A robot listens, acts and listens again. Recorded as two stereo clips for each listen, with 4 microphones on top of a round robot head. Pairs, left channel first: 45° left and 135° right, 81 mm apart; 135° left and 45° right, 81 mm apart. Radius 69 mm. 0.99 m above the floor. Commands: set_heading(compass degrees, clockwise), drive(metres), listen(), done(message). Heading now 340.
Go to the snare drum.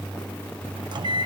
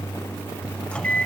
listen()
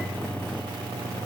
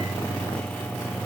listen()
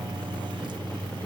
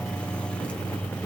done("I can't make out a snare drum to turn to.")